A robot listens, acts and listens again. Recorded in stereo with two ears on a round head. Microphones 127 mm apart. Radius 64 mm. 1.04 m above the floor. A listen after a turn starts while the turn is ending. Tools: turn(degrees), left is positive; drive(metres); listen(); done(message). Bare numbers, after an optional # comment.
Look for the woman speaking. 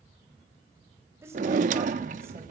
# The woman speaking: about 20° right or 160° right.
turn(-20)
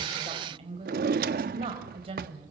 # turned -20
# So it is at 140° right.
turn(-140)
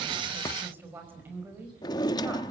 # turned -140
# The woman speaking is now 15° right.
turn(-15)
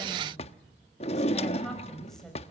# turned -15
done("Facing the woman speaking, over 4 m away.")